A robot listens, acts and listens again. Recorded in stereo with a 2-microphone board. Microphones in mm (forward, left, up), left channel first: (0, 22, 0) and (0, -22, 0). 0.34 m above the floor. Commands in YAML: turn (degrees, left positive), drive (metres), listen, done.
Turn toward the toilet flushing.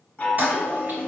turn: -45
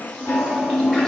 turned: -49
done: "Facing the toilet flushing."